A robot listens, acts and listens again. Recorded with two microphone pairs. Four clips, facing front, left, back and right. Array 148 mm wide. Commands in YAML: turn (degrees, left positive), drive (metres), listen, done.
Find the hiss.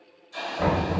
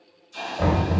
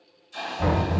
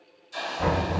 turn: -65
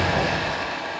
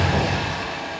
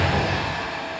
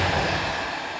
done: "Found it: a hiss, straight ahead."